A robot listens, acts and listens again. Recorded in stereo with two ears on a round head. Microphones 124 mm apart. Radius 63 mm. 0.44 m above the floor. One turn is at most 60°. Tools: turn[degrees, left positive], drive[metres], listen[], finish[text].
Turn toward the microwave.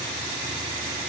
Action: listen[]
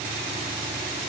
Action: listen[]
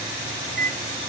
Thought: The microwave: about 75° right or 105° right.
Action: turn[-60]
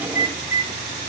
Thought: So it is at 20° right.
Action: turn[-20]
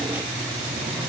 Action: listen[]
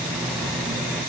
Action: finish[Facing the microwave, 2 to 4 m away.]